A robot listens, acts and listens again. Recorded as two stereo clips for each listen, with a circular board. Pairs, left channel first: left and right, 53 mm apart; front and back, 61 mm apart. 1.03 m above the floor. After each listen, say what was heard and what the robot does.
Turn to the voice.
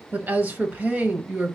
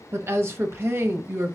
The woman speaking: 140° right. Turn 140° right.
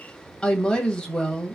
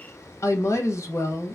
The woman speaking is now 20° left. Turn 20° left.
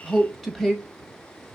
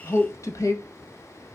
Facing the woman speaking, under 1 m away.